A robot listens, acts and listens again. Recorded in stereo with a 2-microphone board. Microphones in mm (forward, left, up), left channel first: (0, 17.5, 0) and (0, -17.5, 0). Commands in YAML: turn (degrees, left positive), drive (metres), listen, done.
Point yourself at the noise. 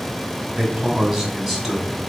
turn: 30
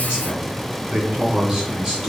turn: -15
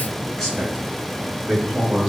turn: 10
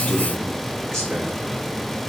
done: "Facing the man speaking."